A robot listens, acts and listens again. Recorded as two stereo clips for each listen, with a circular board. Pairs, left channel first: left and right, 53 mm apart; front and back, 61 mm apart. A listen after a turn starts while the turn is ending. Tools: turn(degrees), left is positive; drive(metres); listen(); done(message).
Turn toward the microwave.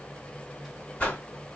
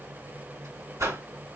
listen()
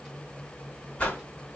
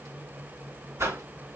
listen()
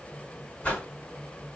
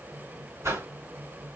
done("I can't make out a microwave to turn to.")